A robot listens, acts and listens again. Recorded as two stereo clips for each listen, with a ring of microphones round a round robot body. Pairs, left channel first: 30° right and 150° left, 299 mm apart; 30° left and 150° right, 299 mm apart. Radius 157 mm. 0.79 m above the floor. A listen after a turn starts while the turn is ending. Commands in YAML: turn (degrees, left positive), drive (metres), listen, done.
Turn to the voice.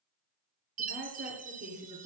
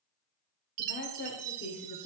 turn: 90
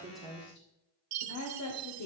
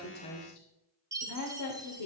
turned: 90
done: "Facing the woman speaking."